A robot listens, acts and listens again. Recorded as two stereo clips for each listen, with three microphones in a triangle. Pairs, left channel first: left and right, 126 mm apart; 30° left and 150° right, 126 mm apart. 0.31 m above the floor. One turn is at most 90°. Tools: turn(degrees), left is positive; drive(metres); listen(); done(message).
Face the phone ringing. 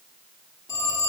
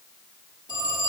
turn(degrees=90)
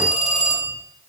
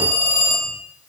turn(degrees=90)
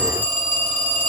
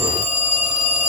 turn(degrees=15)
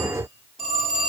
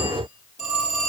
done("Found it: a phone ringing, straight ahead, over 4 m away.")